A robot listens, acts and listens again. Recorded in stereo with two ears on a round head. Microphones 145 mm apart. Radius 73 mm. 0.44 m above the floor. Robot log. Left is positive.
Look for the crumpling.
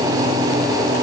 cmd idle
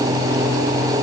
cmd idle
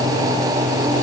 end: I can't make out crumpling to turn to.